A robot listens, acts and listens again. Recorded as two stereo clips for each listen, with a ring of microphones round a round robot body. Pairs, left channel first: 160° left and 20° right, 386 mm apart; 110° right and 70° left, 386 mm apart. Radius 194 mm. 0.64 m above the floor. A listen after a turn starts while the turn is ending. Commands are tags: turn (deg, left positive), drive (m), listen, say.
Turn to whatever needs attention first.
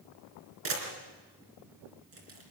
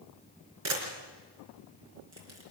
<listen/>
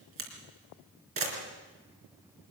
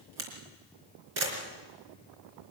<listen/>
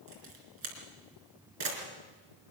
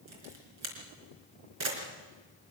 <say>I can't make out anything urgent to turn to.</say>